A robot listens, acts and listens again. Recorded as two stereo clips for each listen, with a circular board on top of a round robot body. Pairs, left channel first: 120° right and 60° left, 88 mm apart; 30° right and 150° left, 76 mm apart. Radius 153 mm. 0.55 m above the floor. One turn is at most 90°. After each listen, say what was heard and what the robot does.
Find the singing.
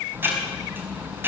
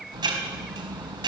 Keep listening.
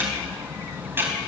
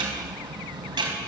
Keep listening.
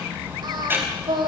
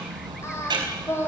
The singing: 25° left. Turn 25° left.
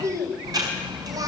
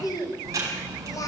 The singing is now 10° left. Turn 10° left.
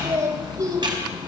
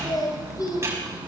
The singing is now 10° left. Turn 10° left.
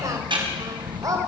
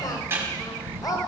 The singing is now 10° left. Turn 10° left.
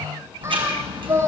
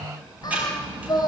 Found it: singing, straight ahead, 2 to 4 m away.